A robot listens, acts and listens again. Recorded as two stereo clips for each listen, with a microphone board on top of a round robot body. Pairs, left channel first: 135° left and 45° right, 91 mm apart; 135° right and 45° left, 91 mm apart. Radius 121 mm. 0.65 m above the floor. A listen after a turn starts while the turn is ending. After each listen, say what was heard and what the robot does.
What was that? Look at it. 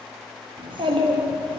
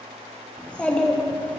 The child speaking: 60° right. Turn 60° right.
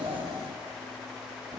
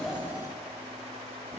Keep listening.
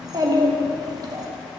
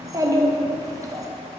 Facing the child speaking.